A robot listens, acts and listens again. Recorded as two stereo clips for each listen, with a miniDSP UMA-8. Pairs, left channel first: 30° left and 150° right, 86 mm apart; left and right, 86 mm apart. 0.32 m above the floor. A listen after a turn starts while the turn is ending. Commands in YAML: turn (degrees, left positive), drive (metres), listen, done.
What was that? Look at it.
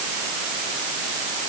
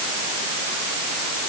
listen: true
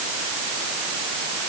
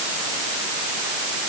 listen: true
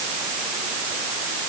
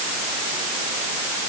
done: "I can't make out anything to turn to."